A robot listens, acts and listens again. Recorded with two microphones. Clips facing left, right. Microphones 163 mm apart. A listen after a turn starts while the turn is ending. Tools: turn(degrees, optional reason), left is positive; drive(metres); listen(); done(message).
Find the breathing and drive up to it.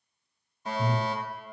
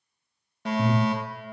turn(degrees=-65, reason="The breathing: about 65° right or 115° right.")
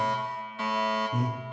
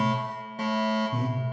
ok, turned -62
turn(degrees=-10, reason="So it is at 10° right.")
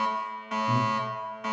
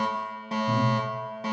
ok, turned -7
drive(metres=1.0)
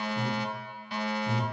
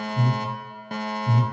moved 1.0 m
drive(metres=1.0)
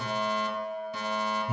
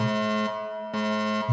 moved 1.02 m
turn(degrees=10, reason="The breathing is now 10° left.")
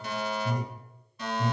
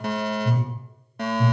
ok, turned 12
drive(metres=1.0)
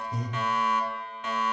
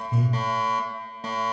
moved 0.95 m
turn(degrees=-10, reason="The breathing is now 10° right.")
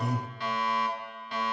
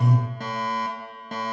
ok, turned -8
drive(metres=1.0)
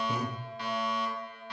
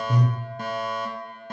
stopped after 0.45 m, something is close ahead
turn(degrees=10, reason="The breathing is now 10° left.")
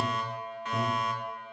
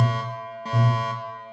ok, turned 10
done("Arrived at the breathing, straight ahead.")